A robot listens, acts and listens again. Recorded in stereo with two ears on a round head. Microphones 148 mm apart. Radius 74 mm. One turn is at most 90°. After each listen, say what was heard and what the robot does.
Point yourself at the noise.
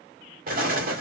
The explosion: about 60° right or 120° right. Turn 60° right.
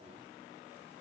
Keep listening.
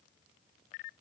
I heard an explosion, but can't make it out now. It was about straight ahead or 60° right.